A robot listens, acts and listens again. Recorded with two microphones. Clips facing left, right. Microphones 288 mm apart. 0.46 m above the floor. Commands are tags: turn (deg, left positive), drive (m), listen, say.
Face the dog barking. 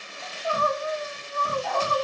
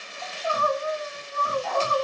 <turn deg="30"/>
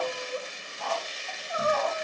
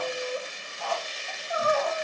<turn deg="120"/>
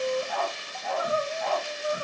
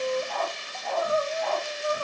<say>Facing the dog barking, 2 to 4 m away.</say>